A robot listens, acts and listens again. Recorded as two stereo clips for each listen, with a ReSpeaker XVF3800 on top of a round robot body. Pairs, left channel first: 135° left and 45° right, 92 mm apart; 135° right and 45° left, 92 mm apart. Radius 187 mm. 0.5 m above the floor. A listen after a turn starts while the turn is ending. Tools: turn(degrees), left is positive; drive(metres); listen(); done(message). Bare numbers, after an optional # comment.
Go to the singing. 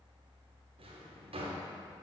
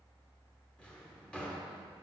listen()
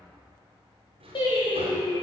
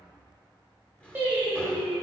# The singing: 115° left.
turn(115)
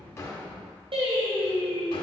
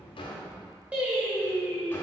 # The singing is now 30° right.
turn(-30)
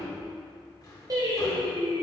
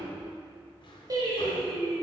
drive(1.0)
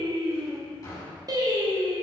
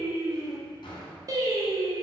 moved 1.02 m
drive(1.0)
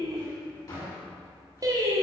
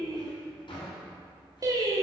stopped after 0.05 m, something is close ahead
done("Arrived at the singing, straight ahead.")